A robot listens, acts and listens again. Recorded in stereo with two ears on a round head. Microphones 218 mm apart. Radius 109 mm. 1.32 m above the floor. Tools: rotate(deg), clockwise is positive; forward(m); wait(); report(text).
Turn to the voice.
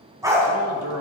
rotate(65)
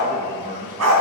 rotate(30)
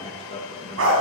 rotate(-30)
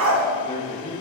rotate(-30)
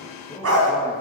rotate(-15)
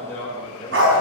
rotate(-10)
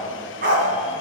wait()
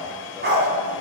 wait()
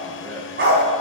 report("Facing where the man speaking came from. I can't hear it now.")